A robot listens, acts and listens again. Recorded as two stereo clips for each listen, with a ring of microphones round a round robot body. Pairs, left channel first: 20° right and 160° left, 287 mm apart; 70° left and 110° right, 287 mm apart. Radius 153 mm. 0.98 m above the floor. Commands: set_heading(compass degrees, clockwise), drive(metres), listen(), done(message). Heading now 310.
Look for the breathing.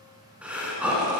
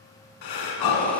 set_heading(240)
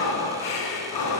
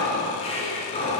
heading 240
done("Found it: breathing, straight ahead, 1 to 2 m away.")